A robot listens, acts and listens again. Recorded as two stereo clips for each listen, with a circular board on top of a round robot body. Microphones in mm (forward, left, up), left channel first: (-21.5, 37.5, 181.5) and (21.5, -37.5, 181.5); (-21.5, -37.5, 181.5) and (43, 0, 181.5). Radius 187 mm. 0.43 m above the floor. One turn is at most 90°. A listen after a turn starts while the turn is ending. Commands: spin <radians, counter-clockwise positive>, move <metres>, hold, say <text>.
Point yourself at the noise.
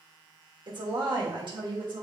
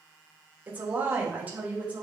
spin -0.70
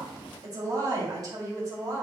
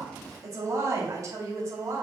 spin -0.35
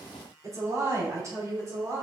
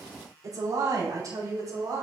spin -0.17
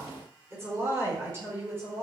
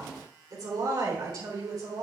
say Found it: a woman speaking, straight ahead.